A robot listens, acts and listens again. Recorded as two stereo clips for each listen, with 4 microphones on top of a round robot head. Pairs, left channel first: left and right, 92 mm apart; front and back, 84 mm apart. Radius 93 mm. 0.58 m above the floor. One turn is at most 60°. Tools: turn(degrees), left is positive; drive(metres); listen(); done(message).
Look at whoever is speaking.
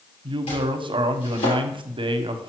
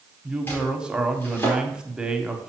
turn(degrees=-60)
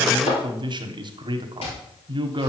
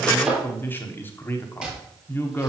turn(degrees=-60)
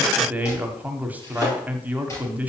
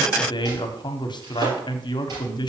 turn(degrees=-20)
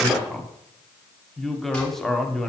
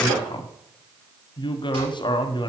done("Found it: a woman speaking, straight ahead.")